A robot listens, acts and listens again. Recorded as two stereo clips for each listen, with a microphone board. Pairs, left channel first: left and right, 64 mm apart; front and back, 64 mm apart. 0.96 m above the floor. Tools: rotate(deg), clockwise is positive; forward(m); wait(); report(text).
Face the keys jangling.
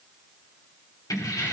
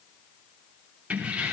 rotate(-110)
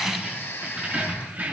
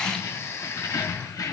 rotate(25)
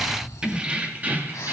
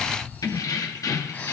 rotate(30)
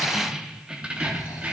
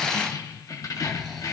rotate(20)
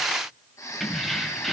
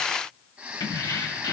report("Found it: keys jangling, straight ahead, 1 to 2 m away.")